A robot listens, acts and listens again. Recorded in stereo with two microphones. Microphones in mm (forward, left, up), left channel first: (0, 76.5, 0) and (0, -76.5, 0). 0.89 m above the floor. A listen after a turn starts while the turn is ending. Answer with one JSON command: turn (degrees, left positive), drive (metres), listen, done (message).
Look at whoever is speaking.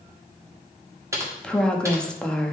{"turn": 30}
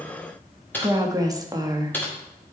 {"turn": -25}
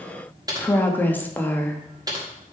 {"turn": 10}
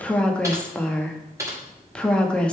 {"done": "Facing the woman speaking."}